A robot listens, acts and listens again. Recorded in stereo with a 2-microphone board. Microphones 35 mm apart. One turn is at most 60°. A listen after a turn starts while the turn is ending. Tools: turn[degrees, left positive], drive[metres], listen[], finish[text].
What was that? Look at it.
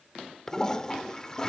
Thought: The toilet flushing: about 20° left or 160° left.
Action: turn[20]
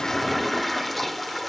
Action: finish[Found it: a toilet flushing, straight ahead.]